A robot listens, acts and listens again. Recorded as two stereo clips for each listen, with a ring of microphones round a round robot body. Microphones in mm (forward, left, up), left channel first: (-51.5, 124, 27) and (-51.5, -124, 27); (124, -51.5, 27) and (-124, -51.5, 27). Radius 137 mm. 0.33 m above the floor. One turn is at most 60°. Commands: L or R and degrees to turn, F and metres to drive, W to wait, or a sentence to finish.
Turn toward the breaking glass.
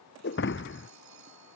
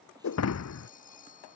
L40
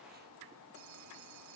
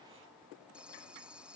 Facing where the breaking glass came from. I can't hear it now.